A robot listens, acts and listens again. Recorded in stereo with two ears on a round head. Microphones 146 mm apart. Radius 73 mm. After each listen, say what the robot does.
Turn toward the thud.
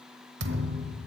Turn 90° right.
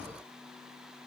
Facing where the thud came from. I can't hear it now.